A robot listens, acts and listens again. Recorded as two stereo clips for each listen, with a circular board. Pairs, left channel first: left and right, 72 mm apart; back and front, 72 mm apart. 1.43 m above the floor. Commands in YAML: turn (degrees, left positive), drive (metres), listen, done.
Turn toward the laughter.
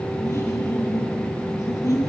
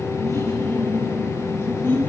turn: 125
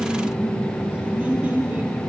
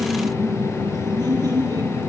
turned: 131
turn: -20
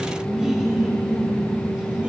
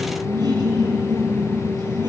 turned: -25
turn: -15
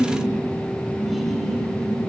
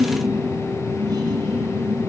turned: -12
done: "Found it: laughter, straight ahead, 2 to 4 m away."